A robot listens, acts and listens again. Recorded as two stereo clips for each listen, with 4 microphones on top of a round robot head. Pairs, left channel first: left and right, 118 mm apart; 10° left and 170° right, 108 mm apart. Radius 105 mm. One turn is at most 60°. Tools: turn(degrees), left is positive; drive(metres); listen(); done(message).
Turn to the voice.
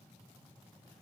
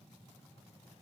listen()
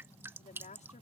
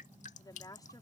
turn(degrees=60)
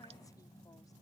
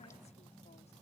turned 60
turn(degrees=10)
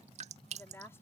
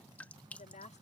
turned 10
turn(degrees=20)
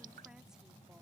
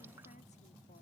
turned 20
listen()
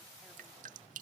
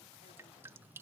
listen()
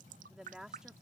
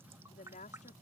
done("Found it: a woman speaking, straight ahead.")